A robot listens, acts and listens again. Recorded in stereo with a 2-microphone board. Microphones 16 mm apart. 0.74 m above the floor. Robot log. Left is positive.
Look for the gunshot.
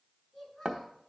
cmd idle
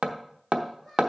cmd idle
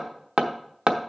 end: I can't make out a gunshot, only a child speaking and hammering.